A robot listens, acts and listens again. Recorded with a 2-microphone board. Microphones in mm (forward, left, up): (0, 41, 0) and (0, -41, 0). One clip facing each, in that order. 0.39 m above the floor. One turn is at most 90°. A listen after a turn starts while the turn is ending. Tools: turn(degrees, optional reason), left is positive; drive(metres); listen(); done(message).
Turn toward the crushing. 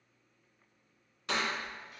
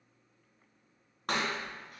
turn(degrees=-60, reason="The crushing: about 60° right or 120° right.")
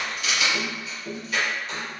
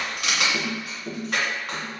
turn(degrees=-60, reason="So it is at 60° right.")
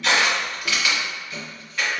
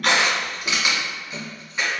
turn(degrees=-15, reason="The crushing is now 15° right.")
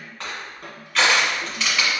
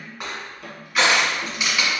done("Facing the crushing.")